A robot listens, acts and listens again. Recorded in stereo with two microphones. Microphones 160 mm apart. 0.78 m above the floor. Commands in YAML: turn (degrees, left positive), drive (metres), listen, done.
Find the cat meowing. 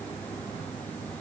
listen: true
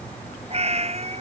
turn: -45
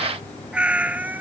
turn: -10
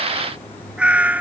turn: -10
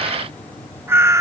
turn: -20
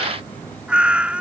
done: "Facing the cat meowing."